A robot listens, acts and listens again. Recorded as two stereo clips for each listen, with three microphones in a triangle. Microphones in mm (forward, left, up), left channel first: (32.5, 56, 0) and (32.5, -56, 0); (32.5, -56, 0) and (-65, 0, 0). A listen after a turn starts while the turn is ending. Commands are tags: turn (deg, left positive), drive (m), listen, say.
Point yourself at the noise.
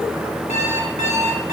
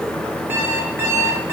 <turn deg="80"/>
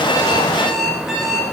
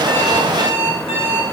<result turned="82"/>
<say>Found it: an alarm clock, straight ahead.</say>